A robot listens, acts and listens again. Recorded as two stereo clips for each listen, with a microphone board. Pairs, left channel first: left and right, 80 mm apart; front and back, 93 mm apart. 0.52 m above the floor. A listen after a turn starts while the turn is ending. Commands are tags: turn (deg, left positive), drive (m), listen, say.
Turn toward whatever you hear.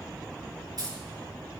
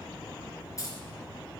<turn deg="-55"/>
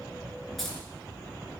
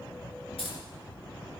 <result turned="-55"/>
<say>Facing the keys jangling.</say>